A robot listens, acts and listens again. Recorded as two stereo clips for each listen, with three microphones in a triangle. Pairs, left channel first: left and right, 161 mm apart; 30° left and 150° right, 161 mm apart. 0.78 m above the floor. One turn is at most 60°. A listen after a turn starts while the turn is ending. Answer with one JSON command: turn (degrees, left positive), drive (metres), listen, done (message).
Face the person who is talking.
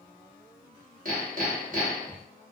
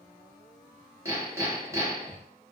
{"listen": true}
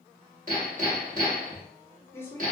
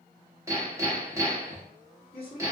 {"turn": 15}
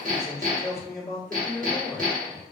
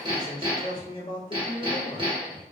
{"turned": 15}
{"done": "Found it: a man speaking, straight ahead, 1 to 2 m away."}